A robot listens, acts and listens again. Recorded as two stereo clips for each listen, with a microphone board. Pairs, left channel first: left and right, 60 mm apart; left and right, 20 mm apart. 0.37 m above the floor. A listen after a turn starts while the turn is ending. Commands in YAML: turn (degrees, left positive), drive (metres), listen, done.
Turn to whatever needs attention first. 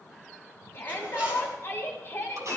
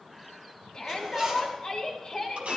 turn: 40
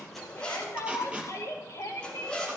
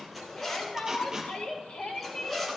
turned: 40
turn: 95
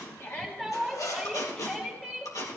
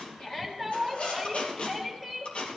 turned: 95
done: "Found it: a shout, straight ahead, 2 to 4 m away."